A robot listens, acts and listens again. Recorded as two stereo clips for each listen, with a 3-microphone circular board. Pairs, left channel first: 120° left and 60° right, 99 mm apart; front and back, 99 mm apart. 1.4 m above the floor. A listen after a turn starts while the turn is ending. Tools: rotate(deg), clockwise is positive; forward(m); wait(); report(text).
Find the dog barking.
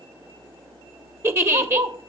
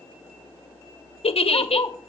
rotate(50)
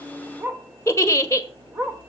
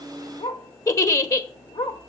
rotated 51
report("Facing the dog barking.")